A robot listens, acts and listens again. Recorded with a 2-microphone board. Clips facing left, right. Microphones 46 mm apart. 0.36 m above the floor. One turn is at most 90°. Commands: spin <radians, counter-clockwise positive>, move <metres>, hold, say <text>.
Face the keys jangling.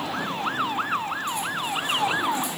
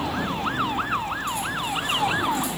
hold
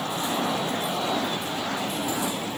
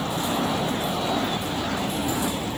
hold
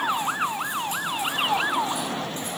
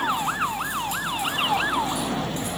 say I can't make out keys jangling.